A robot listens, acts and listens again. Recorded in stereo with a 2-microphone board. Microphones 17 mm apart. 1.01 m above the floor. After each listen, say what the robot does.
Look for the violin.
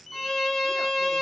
Turn 20° left.
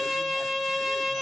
Facing the violin, 2 to 4 m away.